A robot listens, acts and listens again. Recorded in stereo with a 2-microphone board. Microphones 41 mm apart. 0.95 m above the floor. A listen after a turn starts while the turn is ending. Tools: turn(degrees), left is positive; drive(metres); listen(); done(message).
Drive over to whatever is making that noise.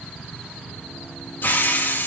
turn(degrees=55)
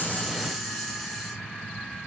listen()
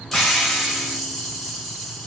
drive(metres=1.0)
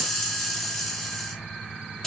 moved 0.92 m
turn(degrees=10)
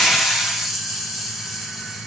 drive(metres=1.0)
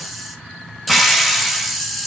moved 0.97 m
drive(metres=1.0)
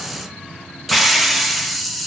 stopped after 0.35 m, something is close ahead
done("I am next to the hiss.")